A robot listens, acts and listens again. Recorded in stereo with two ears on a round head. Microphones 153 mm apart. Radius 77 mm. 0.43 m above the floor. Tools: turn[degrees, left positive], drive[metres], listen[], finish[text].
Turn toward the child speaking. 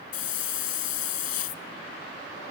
Action: listen[]
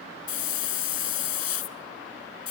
Action: listen[]
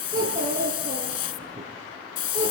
Thought: The child speaking: about 25° right or 155° right.
Action: turn[-25]
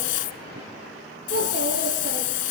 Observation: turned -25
Thought: So it is at 130° right.
Action: turn[-130]
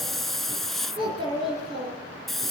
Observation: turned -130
Thought: The child speaking is now 30° right.
Action: turn[-30]
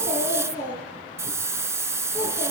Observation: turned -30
Thought: The child speaking is now 10° right.
Action: turn[-10]
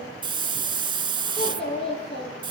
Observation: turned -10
Action: finish[Facing the child speaking.]